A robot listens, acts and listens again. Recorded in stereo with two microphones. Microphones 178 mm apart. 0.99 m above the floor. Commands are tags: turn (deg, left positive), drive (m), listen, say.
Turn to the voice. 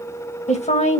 <turn deg="40"/>
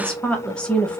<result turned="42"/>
<say>Found it: a woman speaking, straight ahead.</say>